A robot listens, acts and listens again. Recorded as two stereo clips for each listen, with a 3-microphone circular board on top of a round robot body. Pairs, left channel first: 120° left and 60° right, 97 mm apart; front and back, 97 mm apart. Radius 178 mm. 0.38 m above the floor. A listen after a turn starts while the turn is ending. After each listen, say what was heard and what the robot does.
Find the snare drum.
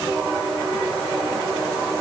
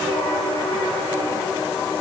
Keep listening.
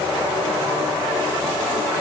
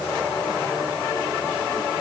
Keep listening.
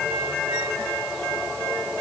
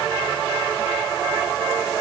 I can't make out a snare drum.